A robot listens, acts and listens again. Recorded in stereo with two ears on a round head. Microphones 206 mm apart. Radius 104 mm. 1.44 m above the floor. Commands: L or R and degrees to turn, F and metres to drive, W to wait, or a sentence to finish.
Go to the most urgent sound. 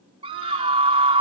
R25
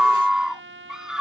F1.0
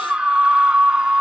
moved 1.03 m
F1.0
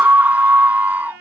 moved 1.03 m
R10
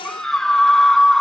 F1.0
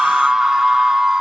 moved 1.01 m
F1.0
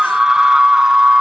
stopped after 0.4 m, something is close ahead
I am next to the scream.